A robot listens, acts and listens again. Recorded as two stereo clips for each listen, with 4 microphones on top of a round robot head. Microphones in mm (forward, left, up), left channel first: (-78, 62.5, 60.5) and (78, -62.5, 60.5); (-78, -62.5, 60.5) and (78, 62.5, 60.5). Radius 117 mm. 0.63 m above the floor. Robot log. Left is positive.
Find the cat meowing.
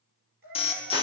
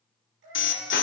note: The cat meowing: 10° left.
cmd yaw +10
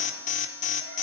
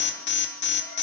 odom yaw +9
cmd idle
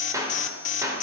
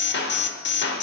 cmd idle
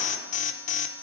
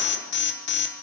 end: Facing where the cat meowing came from. I can't hear it now.